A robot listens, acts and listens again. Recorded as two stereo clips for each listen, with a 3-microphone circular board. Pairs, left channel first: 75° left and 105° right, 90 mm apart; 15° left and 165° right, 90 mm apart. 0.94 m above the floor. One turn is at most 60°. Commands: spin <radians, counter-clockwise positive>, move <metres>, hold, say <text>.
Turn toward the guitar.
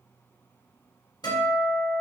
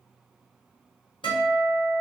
spin 0.70
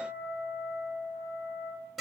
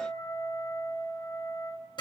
spin -0.26
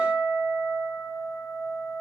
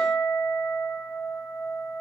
say Found it: a guitar, straight ahead, 1 to 2 m away.